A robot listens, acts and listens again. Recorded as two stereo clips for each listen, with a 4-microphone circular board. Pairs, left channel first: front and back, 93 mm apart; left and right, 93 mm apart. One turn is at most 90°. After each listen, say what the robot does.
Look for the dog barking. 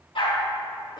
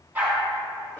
Turn 20° right.
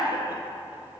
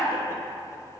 Keep listening.
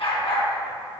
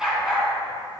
Facing the dog barking.